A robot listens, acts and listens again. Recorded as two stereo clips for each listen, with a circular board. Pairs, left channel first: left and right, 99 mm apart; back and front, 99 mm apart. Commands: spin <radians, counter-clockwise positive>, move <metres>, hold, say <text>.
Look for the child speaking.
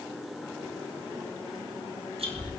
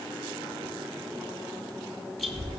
spin -0.17
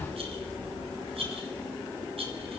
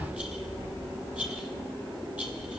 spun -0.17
say Facing the child speaking.